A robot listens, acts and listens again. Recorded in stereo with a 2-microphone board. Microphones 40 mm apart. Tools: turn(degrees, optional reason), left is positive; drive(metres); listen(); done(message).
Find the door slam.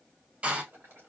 turn(degrees=-30, reason="The door slam: about 30° right or 150° right.")
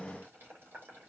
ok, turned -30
listen()
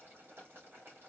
done("I heard a door slam, but can't make it out now. It was about straight ahead or 120° right.")